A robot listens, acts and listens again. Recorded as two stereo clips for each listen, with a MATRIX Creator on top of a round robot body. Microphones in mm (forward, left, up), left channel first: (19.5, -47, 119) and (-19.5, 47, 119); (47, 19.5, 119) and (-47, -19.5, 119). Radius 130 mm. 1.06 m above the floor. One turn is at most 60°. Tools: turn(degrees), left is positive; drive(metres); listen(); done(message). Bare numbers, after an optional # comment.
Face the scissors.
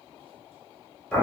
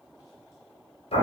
listen()
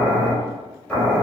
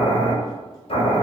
listen()
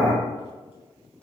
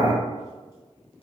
done("I can't make out scissors to turn to.")